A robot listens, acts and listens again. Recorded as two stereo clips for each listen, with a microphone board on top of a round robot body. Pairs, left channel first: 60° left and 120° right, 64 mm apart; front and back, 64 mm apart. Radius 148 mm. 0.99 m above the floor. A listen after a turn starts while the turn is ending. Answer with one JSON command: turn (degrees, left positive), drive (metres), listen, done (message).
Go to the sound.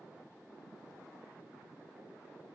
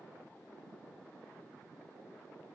{"listen": true}
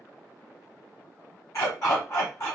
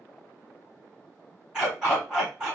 {"turn": 100}
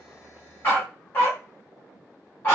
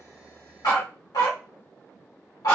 {"drive": 1.0}
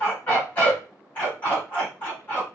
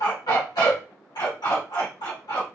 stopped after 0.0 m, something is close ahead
{"done": "Blocked. The dog barking is further on, straight ahead."}